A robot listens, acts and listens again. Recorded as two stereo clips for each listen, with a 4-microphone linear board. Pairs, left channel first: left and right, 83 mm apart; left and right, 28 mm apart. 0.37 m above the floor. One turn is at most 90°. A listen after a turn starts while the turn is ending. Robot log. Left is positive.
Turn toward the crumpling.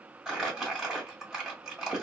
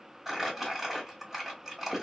cmd yaw -30
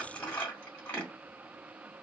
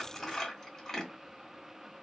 note: So it is at 25° left.
cmd yaw +25
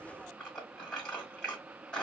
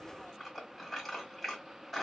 note: The crumpling is now 10° left.
cmd yaw +10
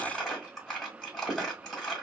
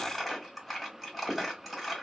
end: Found it: crumpling, straight ahead, 1 to 2 m away.